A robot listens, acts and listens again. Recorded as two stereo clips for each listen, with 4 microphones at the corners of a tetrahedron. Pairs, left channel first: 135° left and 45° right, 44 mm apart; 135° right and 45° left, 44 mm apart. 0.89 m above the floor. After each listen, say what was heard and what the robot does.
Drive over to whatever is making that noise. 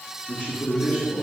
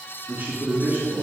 The man speaking: 80° left. Turn 80° left.
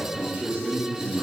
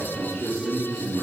Drive 1.0 m forward.
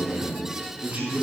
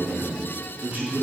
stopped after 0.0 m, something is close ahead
Something is in my way. I am facing the man speaking but have not reached it.